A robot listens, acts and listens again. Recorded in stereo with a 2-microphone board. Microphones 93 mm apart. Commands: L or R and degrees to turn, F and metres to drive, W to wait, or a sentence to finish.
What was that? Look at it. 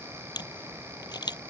L50
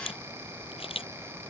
L85
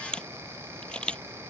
L10
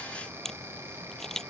Found it: a camera shutter, straight ahead.